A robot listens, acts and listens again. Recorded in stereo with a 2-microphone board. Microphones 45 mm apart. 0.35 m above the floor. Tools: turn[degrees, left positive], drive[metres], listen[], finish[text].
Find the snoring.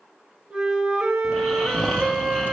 Action: turn[30]
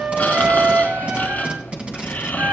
Thought: So it is at 140° left.
Action: turn[140]
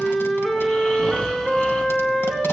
Action: listen[]
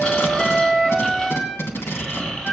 Thought: The snoring is now 15° left.
Action: turn[15]
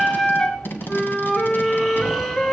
Action: listen[]
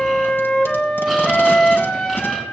Action: listen[]
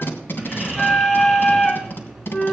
Action: finish[Facing the snoring, 2 to 4 m away.]